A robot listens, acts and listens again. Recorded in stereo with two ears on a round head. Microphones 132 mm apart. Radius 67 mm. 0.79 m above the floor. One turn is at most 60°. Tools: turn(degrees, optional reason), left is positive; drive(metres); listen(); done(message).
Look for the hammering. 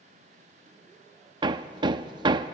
turn(degrees=-35, reason="The hammering: about 35° right or 145° right.")
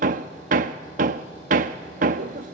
turn(degrees=-60, reason="So it is at 110° right.")
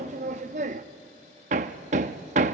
turn(degrees=-55, reason="The hammering is now 55° right.")
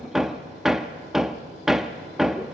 done("Facing the hammering.")